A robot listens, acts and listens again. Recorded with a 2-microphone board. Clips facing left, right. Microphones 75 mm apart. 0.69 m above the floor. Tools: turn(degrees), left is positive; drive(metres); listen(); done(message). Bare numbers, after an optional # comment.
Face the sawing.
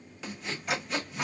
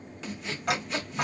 turn(30)
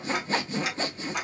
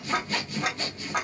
# So it is at 145° left.
turn(145)
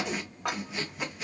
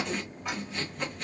done("Found it: sawing, straight ahead.")